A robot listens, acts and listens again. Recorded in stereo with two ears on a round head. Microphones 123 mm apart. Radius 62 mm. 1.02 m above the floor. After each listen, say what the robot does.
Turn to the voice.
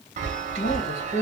Turn 65° left.
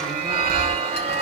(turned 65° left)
Keep listening.
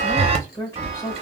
Turn 25° left.
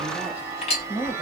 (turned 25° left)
Turn 10° right.
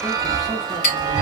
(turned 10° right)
Keep listening.
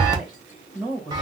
Facing the woman speaking.